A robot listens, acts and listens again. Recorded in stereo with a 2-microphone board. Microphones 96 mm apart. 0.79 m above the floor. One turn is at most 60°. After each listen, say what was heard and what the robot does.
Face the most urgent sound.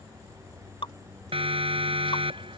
The siren: about 70° right or 110° right. Turn 60° right.
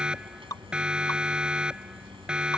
So it is at 10° right. Turn 10° right.
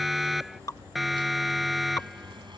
Found it: a siren, straight ahead.